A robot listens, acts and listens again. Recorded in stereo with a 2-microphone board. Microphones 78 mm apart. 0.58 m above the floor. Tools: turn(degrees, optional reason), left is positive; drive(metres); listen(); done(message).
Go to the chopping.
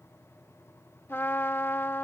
listen()
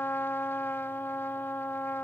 listen()
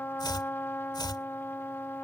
turn(degrees=65, reason="The chopping: about 65° left or 115° left.")
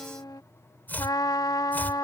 turn(degrees=25, reason="So it is at 25° left.")
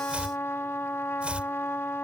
turn(degrees=-15, reason="The chopping is now 15° right.")
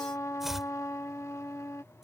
drive(metres=1.0)
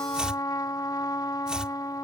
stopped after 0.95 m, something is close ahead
turn(degrees=-15, reason="The chopping is now 15° right.")
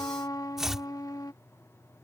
done("Arrived at the chopping, straight ahead.")